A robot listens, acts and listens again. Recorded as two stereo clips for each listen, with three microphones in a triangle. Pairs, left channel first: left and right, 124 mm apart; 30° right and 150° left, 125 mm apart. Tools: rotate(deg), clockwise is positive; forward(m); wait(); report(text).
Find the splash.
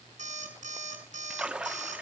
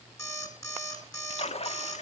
rotate(10)
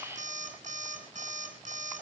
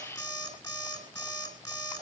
report("Facing where the splash came from. I can't hear it now.")